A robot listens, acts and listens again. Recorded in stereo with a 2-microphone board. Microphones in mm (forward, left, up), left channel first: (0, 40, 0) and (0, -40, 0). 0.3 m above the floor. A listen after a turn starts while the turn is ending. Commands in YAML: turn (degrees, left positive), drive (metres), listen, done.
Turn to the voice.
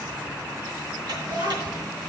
turn: -60
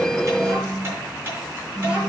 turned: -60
turn: -15
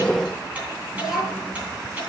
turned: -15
done: "Facing the child speaking."